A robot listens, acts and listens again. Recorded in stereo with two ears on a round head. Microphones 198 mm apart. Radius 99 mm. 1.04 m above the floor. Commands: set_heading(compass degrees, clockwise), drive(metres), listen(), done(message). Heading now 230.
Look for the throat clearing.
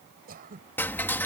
set_heading(270)
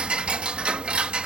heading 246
listen()
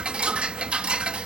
listen()
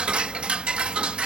done("I heard throat clearing, but can't make it out now. It was about 25° right or 120° right.")